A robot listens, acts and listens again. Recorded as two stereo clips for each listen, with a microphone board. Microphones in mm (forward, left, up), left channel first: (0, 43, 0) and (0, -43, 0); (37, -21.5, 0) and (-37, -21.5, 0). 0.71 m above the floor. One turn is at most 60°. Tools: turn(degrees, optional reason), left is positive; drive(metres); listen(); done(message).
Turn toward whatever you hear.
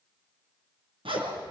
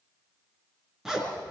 turn(degrees=-60, reason="The zipper: 95° right.")
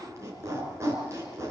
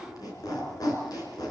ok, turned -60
turn(degrees=-35, reason="The zipper is now 35° right.")
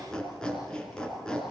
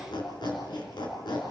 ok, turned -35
turn(degrees=10, reason="The zipper is now 10° left.")
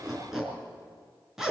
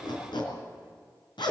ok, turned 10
done("Facing the zipper.")